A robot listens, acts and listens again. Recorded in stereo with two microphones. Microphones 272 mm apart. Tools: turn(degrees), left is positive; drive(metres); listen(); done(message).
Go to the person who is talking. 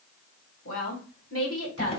turn(degrees=55)
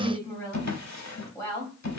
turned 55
turn(degrees=10)
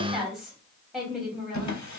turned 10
drive(metres=1.0)
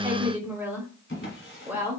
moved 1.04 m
turn(degrees=-10)
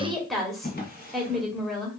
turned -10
drive(metres=1.0)
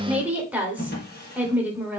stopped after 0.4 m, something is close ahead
turn(degrees=-10)
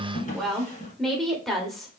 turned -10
done("Arrived at the woman speaking, straight ahead.")